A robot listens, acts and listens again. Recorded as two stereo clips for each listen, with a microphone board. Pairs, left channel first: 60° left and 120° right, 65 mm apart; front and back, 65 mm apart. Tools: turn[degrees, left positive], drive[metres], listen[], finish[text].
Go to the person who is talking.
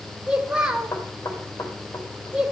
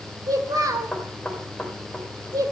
Thought: The child speaking: 165° left.
Action: turn[165]
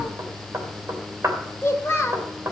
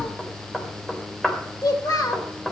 Thought: The child speaking is now 10° left.
Action: turn[10]
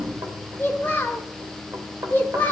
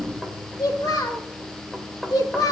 Action: drive[1.0]
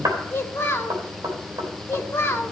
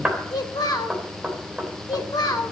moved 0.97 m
Action: drive[1.0]
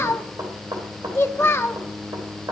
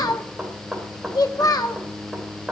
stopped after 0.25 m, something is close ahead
Thought: The child speaking is now 10° left.
Action: turn[10]
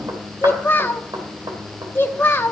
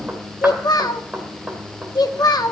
Action: finish[I am next to the child speaking.]